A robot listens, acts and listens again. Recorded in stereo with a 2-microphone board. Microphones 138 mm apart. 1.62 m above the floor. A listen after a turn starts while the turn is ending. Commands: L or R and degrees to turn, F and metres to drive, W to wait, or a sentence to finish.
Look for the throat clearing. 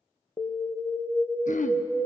L65
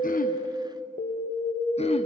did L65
L50
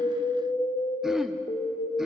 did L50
Found it: throat clearing, straight ahead, under 1 m away.